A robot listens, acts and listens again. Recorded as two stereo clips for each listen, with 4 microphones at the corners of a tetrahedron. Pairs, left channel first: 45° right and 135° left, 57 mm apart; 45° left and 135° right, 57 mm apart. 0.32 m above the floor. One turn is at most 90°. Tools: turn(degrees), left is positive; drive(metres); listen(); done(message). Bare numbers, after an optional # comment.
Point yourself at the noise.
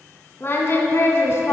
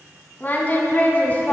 # The singing: 15° right.
turn(-15)
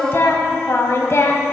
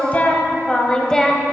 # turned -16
# The singing is now 40° right.
turn(-40)
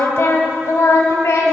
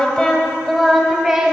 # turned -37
# The singing is now 60° right.
turn(-60)
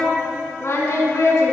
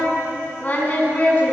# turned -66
# The singing is now 15° right.
turn(-15)
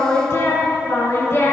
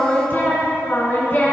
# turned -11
done("Facing the singing, 2 to 4 m away.")